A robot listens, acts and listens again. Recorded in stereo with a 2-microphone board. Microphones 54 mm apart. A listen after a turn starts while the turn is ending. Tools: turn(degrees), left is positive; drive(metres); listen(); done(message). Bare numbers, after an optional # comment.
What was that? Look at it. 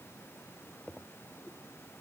listen()
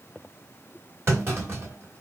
# The clunk: about 45° right or 135° right.
turn(-45)
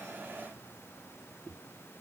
listen()
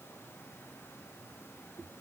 done("I heard a clunk, but can't make it out now. It was about straight ahead or 90° right.")